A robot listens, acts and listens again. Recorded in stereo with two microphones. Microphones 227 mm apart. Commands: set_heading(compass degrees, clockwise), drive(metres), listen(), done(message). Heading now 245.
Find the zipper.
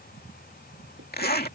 set_heading(200)
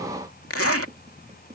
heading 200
set_heading(110)
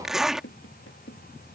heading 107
done("Found it: a zipper, straight ahead.")